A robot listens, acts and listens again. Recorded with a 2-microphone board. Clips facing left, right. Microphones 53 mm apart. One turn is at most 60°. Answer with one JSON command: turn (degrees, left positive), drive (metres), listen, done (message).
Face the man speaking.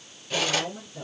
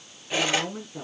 {"turn": -60}
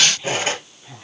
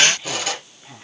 {"turn": -15}
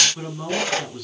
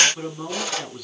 {"done": "Facing the man speaking."}